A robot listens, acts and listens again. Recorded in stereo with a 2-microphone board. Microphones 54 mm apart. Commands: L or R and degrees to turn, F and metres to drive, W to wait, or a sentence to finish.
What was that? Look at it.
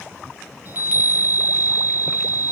R35
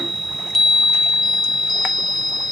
Facing the chime.